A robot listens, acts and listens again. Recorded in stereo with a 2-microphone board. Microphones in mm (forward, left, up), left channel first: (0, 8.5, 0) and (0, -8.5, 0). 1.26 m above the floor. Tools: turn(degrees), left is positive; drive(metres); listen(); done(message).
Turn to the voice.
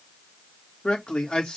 turn(degrees=75)
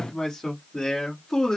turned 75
turn(degrees=40)
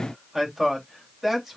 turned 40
turn(degrees=-15)
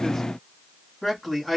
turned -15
done("Facing the man speaking, 2 to 4 m away.")